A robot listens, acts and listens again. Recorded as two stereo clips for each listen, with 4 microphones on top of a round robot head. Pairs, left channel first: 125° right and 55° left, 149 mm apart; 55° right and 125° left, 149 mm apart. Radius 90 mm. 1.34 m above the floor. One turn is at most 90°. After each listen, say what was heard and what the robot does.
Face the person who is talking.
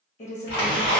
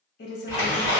The woman speaking: 85° right. Turn 85° right.
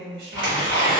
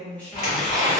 The woman speaking is now 30° left. Turn 30° left.
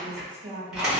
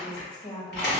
Found it: a woman speaking, straight ahead.